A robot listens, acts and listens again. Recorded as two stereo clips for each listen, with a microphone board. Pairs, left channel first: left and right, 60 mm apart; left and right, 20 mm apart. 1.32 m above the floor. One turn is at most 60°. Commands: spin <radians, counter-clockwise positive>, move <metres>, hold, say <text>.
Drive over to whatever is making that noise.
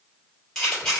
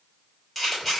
spin 0.52
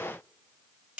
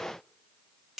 spin -0.35
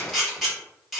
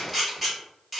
move 1.0
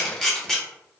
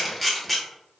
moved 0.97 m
move 1.0
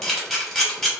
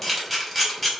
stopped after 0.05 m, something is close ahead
say I am next to the camera shutter.